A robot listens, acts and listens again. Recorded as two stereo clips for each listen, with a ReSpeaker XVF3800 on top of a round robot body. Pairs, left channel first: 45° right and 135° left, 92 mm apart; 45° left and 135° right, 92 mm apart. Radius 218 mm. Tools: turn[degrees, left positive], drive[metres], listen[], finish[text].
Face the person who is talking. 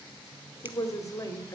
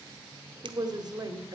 Thought: The woman speaking: 95° right.
Action: turn[-95]
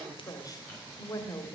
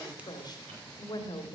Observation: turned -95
Action: finish[Found it: a woman speaking, straight ahead, 2 to 4 m away.]